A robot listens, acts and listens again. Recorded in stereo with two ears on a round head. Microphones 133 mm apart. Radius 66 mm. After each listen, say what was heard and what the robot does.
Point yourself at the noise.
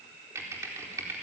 The typing on a keyboard: about 20° right or 160° right. Turn 20° right.
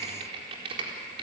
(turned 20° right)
So it is at 140° right. Turn 140° right.
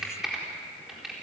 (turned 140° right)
Found it: typing on a keyboard, straight ahead, over 4 m away.